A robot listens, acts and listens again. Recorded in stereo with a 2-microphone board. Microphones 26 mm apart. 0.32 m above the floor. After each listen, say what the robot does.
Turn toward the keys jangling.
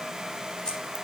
Turn 35° left.
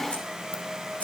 Keep listening.
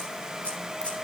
Turn 115° left.
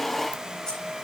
Keep listening.
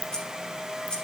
Turn 30° left.
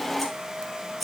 Facing the keys jangling.